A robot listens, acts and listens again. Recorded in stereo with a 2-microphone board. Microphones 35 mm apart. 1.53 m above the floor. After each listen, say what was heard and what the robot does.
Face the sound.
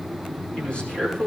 The man speaking: about 35° left or 145° left. Turn 35° left.
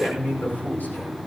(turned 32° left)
So it is at 110° left. Turn 110° left.
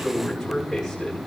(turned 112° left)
Facing the man speaking, over 4 m away.